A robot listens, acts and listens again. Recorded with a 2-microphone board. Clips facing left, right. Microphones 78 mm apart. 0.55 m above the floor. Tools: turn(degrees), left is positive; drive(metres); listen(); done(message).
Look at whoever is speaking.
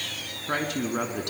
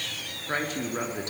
turn(degrees=60)
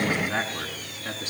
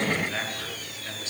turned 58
turn(degrees=50)
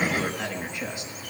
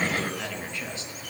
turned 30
turn(degrees=15)
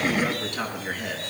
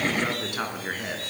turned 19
turn(degrees=-10)
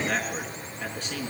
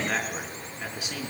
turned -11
done("Found it: a man speaking, straight ahead.")